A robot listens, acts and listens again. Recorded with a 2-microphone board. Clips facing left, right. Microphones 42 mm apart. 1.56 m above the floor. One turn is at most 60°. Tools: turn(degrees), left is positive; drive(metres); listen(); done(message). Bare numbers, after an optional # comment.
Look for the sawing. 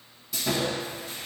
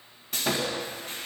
# The sawing: about 45° right or 135° right.
turn(-45)
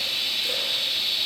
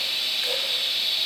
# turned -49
done("Found it: sawing, straight ahead, 1 to 2 m away.")